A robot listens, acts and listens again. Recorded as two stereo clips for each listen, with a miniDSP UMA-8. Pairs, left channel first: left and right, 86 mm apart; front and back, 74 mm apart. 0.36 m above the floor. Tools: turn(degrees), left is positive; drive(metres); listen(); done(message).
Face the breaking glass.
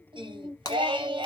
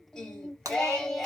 turn(degrees=135)
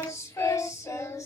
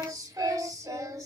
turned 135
done("Facing where the breaking glass came from. I can't hear it now.")